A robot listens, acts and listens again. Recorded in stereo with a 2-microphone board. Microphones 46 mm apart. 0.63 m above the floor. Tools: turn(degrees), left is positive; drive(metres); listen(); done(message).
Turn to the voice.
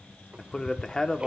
turn(degrees=15)
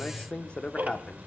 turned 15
turn(degrees=155)
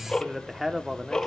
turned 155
turn(degrees=-10)
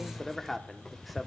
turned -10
done("Facing the man speaking, 1 to 2 m away.")